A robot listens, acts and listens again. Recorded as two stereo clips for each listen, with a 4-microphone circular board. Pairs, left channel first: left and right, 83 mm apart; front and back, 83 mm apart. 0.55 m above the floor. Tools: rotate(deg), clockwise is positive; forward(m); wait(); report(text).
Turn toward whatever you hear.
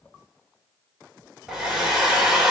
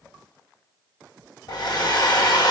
rotate(10)
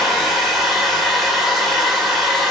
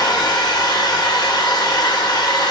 report("Facing the hair dryer.")